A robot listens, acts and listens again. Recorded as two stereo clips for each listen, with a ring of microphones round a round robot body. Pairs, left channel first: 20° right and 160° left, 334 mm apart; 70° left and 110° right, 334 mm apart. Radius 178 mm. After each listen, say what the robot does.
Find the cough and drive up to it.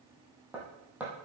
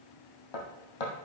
Keep listening.
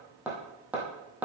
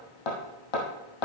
Keep listening.
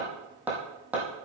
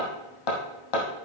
I can't make out a cough, only hammering.